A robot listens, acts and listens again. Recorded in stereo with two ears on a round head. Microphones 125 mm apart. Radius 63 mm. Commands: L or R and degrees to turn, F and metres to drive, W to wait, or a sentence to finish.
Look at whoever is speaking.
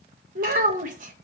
R60
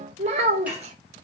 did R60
R50
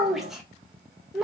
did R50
Found it: a child speaking, straight ahead, under 1 m away.